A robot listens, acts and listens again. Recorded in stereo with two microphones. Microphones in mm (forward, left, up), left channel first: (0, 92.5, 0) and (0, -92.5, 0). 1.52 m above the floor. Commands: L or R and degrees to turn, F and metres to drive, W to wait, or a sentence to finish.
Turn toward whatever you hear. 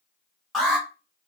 L30
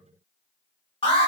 L150
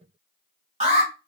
R40
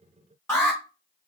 L15
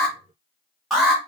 Facing the alarm, 1 to 2 m away.